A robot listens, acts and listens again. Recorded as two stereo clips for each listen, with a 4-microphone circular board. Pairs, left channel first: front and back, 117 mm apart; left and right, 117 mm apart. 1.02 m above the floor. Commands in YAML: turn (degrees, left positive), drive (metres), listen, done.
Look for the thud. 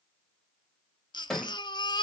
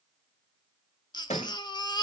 turn: 85
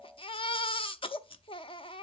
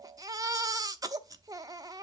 done: "I heard a thud from this way, but can't make it out now."